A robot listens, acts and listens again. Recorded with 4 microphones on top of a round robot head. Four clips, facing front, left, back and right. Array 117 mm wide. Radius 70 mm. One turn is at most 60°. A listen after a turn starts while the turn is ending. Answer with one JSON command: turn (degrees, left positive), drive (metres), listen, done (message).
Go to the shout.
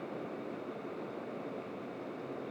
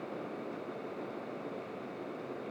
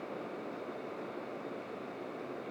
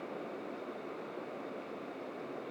{"listen": true}
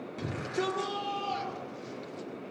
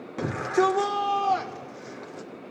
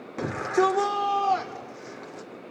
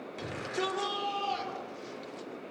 {"turn": 60}
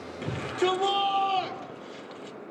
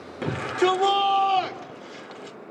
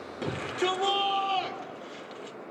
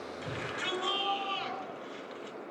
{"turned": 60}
{"turn": 60}
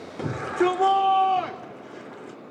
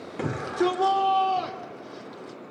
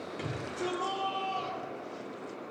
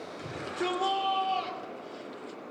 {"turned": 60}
{"turn": 25}
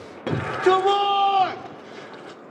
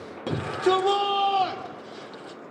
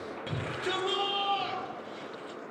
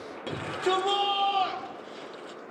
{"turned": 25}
{"turn": 15}
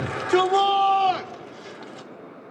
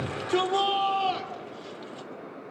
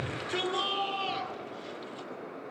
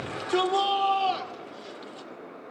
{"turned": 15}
{"drive": 1.0}
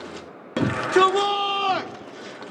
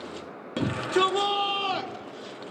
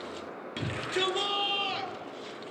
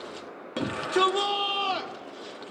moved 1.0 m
{"drive": 1.0}
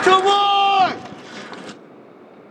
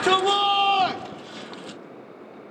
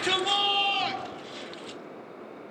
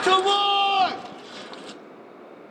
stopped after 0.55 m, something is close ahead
{"done": "I am next to the shout."}